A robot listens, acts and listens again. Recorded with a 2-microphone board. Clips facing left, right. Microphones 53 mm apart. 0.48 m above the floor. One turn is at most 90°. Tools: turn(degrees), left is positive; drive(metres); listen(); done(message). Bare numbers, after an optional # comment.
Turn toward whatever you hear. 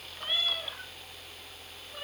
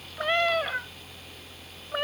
turn(-90)
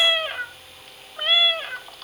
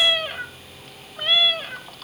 # So it is at 15° left.
turn(15)
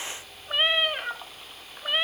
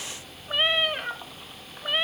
done("Found it: a cat meowing, straight ahead.")